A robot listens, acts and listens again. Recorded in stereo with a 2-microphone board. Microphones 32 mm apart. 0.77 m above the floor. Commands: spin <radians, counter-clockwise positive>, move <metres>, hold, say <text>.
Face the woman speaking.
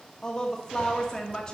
spin 0.44
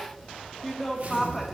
say Found it: a woman speaking, straight ahead.